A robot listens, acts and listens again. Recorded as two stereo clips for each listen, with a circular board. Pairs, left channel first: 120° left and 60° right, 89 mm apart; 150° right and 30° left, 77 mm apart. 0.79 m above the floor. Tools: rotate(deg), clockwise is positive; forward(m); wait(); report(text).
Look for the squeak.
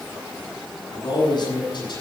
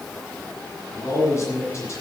wait()
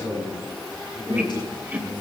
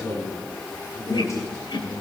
rotate(130)
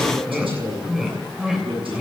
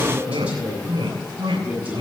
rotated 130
rotate(-25)
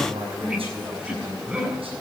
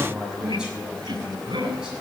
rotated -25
rotate(-20)
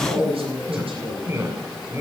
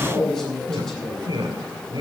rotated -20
report("Found it: a squeak, straight ahead, 2 to 4 m away.")